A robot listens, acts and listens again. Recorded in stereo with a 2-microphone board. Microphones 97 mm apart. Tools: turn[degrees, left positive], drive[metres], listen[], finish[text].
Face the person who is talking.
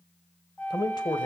Thought: The man speaking: about 45° left or 135° left.
Action: turn[45]
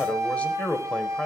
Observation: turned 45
Thought: So it is at 15° left.
Action: turn[15]
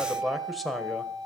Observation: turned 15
Action: finish[Facing the man speaking, 1 to 2 m away.]